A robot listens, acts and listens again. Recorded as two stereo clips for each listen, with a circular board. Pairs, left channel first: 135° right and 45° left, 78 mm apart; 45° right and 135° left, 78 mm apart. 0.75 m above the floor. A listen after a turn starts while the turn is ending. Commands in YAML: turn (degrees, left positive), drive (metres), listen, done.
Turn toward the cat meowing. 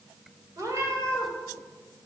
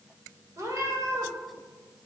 turn: 95
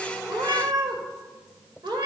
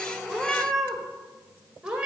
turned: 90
turn: 60
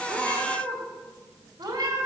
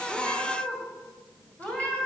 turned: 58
turn: 25
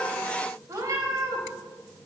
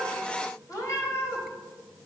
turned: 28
done: "Found it: a cat meowing, straight ahead, 1 to 2 m away."